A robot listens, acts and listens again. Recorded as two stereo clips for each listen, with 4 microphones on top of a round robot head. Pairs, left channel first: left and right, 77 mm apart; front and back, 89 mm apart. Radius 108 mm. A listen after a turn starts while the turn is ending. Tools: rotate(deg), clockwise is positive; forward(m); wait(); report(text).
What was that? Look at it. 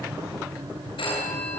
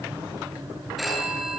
rotate(-90)
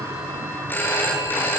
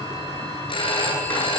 rotate(-25)
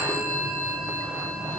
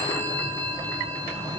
rotate(-20)
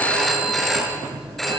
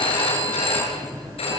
report("Facing the phone ringing, over 4 m away.")